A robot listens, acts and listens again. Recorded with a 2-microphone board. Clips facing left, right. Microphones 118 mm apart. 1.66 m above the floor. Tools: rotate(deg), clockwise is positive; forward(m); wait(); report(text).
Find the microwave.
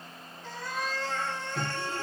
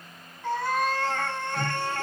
rotate(-35)
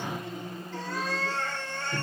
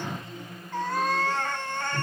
rotate(-105)
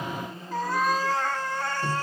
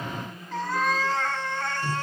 rotate(-30)
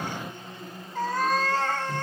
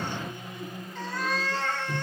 rotate(15)
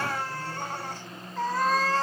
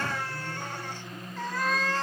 report("Facing the microwave, 1 to 2 m away.")